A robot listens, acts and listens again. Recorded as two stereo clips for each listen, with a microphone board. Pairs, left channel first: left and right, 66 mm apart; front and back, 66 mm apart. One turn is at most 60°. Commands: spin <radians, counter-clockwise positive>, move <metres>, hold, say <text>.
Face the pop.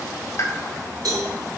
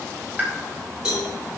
spin 1.05
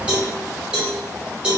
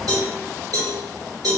spin 1.05
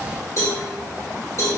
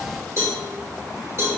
say Facing where the pop came from. I can't hear it now.